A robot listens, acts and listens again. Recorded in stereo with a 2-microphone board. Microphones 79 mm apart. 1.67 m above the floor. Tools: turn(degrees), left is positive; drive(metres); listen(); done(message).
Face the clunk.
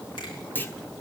turn(degrees=25)
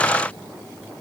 listen()
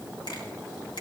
done("I heard a clunk, but can't make it out now. It was about straight ahead or 130° left.")